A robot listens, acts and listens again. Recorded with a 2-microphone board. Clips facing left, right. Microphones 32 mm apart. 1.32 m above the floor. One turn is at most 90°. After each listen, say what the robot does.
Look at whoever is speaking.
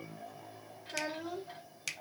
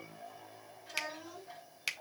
Turn 45° left.
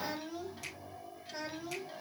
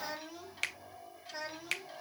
Facing the child speaking.